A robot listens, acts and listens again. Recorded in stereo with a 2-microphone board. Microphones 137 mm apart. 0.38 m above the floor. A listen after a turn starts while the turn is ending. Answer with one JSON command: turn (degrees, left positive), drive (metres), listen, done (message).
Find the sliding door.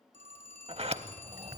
{"turn": -55}
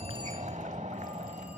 {"turn": -70}
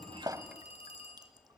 {"listen": true}
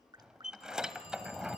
{"done": "Facing the sliding door."}